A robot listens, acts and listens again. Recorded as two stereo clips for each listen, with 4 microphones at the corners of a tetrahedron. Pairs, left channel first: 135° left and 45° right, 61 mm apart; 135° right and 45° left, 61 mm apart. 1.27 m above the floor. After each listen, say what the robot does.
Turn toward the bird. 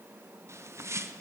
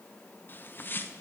Turn 80° right.
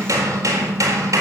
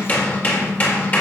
Keep listening.
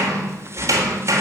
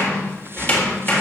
Keep listening.
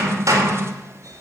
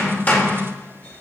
I heard a bird from this way, but can't make it out now.